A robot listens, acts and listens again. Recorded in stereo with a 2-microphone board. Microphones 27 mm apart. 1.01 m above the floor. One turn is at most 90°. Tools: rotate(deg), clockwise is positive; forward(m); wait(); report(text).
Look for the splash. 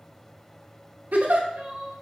wait()
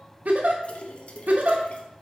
rotate(-40)
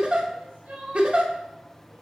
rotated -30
wait()
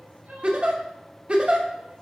report("I heard a splash, but can't make it out now. It was about 10° left or 110° left.")